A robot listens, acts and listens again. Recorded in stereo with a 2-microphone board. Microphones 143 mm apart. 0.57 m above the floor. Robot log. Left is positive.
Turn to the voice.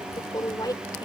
note: The woman speaking: about 25° left or 155° left.
cmd yaw +25
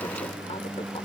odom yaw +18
cmd idle
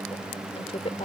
note: So it is at 140° left.
cmd yaw +140
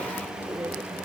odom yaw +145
cmd idle
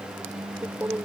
note: The woman speaking is now 15° right.
cmd yaw -15
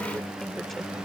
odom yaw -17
cmd idle
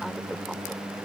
cmd idle
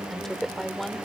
end: Found it: a woman speaking, straight ahead.